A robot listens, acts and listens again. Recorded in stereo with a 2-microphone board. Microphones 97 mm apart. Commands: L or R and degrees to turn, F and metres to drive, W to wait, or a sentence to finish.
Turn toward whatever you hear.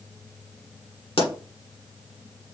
L90
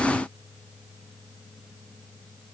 I heard a pop from this way, but can't make it out now.